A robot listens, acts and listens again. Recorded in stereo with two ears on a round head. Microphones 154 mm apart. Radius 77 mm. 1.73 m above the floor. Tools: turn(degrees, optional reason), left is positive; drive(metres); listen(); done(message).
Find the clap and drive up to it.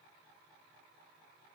listen()
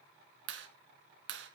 turn(degrees=-90)
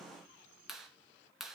drive(metres=1.0)
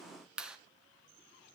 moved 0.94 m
drive(metres=1.0)
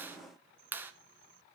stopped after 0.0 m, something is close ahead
turn(degrees=-10, reason="The clap is now 10° right.")
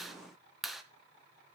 done("Arrived at the clap, straight ahead.")